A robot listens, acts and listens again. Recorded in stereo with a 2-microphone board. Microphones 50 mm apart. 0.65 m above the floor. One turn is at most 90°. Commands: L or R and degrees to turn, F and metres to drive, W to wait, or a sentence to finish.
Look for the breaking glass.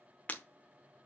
L30
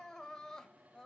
W
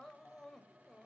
I heard breaking glass, but can't make it out now. It was about straight ahead or 120° left.